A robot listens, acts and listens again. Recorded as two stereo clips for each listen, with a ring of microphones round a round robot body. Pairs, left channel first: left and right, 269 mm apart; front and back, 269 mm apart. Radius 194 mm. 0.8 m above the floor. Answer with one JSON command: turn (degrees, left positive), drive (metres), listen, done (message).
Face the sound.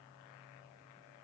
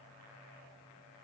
{"listen": true}
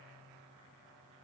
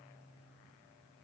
{"listen": true}
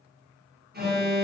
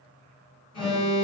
{"turn": -35}
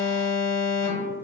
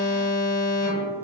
{"turn": 10}
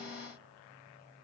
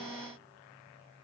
{"listen": true}
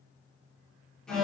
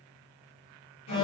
{"done": "Found it: an alarm, straight ahead, 1 to 2 m away."}